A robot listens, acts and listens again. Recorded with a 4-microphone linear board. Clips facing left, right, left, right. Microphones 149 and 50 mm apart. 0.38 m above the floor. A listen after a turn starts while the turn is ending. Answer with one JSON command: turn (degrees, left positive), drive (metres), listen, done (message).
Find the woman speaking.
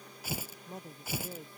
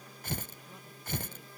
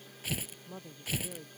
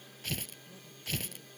{"turn": 50}
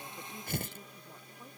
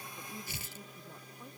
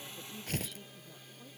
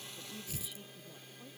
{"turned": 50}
{"listen": true}
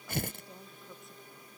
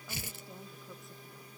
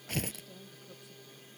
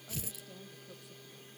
{"listen": true}
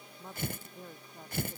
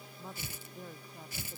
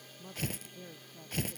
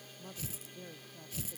{"done": "Facing the woman speaking."}